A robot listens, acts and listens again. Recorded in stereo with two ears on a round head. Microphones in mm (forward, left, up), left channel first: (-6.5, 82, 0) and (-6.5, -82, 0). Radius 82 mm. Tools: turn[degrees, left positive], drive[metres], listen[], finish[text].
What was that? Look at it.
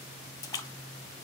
Thought: The splash: about 20° left or 160° left.
Action: turn[20]
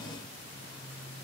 Action: listen[]
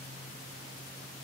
Action: finish[I heard a splash, but can't make it out now. It was about straight ahead or 140° left.]